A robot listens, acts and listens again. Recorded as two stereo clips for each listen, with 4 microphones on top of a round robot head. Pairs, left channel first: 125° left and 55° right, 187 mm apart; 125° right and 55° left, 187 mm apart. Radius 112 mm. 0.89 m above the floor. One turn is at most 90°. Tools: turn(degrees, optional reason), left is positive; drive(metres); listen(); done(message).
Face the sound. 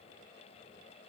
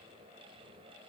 listen()
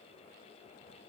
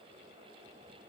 listen()
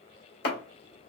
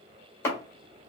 turn(degrees=90, reason="The chopping: 160° left.")
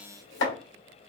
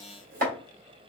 turn(degrees=90, reason="The chopping is now 100° left.")
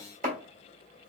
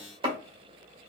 turn(degrees=-10, reason="The chopping is now 10° right.")
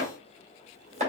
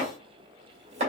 done("Found it: chopping, straight ahead.")